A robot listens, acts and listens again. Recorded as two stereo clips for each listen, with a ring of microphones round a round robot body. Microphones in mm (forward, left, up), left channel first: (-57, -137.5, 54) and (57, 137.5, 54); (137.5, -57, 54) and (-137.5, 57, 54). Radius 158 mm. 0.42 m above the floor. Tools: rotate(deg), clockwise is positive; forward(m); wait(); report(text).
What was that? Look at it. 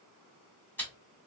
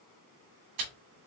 rotate(-165)
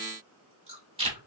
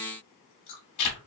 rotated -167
report("Facing the chewing.")